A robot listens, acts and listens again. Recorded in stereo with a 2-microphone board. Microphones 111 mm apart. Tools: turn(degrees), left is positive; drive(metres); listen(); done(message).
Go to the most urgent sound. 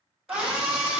turn(degrees=-30)
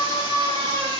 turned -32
turn(degrees=-140)
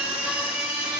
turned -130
turn(degrees=-10)
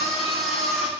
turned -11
drive(metres=1.0)
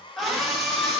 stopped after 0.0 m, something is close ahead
done("Something is in my way. I am facing the scream but have not reached it.")